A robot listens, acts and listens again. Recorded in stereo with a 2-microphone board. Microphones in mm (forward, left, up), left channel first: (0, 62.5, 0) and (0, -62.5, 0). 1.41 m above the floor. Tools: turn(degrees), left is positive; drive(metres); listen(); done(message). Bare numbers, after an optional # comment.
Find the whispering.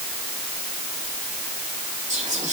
# The whispering: about 65° right or 115° right.
turn(-65)
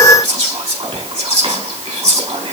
# So it is at 50° right.
turn(-50)
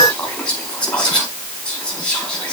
# The whispering is now 10° left.
turn(10)
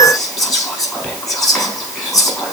done("Facing the whispering, 2 to 4 m away.")